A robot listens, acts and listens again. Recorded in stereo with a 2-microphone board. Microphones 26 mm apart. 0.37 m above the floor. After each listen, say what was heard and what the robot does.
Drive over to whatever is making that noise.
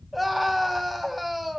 Turn 30° left.
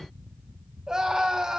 So it is at 25° right. Turn 25° right.
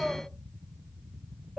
Drive 1.0 m forward.
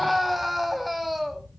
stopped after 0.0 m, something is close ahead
Blocked. The scream is further on, straight ahead.